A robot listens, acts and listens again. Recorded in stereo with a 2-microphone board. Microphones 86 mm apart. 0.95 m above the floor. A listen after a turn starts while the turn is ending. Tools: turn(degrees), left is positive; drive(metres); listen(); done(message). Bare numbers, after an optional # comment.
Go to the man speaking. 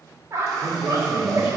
# The man speaking: about 40° left or 140° left.
turn(40)
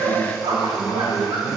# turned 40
drive(1.0)
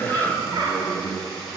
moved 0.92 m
drive(1.0)
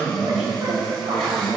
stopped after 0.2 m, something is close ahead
done("Arrived at the man speaking, straight ahead.")